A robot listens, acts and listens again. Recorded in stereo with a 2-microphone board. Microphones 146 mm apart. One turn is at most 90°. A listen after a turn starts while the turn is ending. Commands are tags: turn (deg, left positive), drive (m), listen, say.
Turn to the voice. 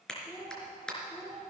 <turn deg="25"/>
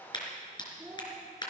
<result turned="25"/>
<say>Facing the child speaking.</say>